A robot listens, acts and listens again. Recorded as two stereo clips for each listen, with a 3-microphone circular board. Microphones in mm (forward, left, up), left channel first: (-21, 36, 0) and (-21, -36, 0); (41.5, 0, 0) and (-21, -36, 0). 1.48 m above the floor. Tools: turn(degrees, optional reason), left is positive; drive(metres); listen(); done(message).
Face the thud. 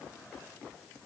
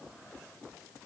listen()
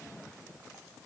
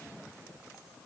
listen()
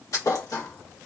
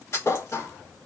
turn(degrees=70, reason="The thud: 70° left.")
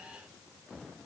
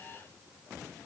done("Facing where the thud came from. I can't hear it now.")